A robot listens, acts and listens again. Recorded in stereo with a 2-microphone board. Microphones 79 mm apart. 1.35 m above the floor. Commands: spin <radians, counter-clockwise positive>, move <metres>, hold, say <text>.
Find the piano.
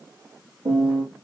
spin -1.57
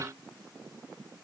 hold
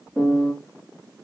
spin 0.17
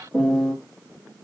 say Found it: a piano, straight ahead.